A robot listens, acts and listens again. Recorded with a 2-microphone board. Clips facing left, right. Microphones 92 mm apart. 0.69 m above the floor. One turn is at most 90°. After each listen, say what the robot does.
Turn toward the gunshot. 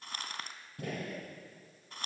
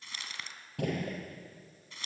Turn 90° right.
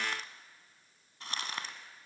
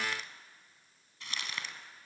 Facing where the gunshot came from. I can't hear it now.